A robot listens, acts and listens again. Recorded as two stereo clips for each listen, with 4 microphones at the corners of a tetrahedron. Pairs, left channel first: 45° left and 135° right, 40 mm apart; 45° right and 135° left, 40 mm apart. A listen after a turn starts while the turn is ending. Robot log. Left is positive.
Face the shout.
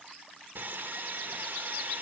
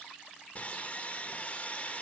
cmd idle
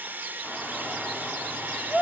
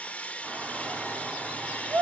note: The shout: 100° left.
cmd yaw +100
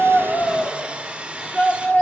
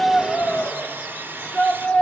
end: Found it: a shout, straight ahead, 2 to 4 m away.